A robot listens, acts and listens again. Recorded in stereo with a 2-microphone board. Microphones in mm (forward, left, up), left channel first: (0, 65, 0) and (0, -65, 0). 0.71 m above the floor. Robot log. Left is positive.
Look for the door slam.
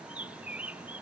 cmd idle
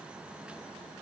cmd idle
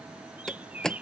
cmd yaw +30
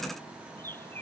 cmd idle
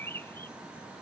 end: I heard a door slam, but can't make it out now. It was about 25° right or 145° left.